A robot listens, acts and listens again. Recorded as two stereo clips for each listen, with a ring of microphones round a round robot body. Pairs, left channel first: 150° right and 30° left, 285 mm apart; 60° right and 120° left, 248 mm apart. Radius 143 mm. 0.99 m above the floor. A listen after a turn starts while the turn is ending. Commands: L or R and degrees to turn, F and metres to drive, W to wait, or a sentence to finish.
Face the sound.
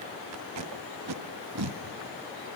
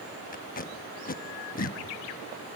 Found it: tape being pulled, straight ahead, 1 to 2 m away.